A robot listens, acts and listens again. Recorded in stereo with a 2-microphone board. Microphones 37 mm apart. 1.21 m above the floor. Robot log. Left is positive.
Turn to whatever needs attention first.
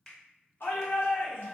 note: The shout: about 75° left or 105° left.
cmd yaw +75
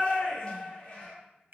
note: So it is at 25° left.
cmd yaw +25
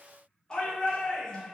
note: The shout is now 20° left.
cmd yaw +20
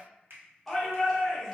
end: Facing the shout.